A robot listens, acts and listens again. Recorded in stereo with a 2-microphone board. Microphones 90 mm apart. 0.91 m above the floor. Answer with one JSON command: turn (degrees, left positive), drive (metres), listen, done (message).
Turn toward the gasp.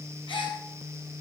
{"turn": 60}
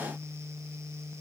{"listen": true}
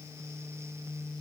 {"done": "I heard a gasp, but can't make it out now. It was about straight ahead or 60° left."}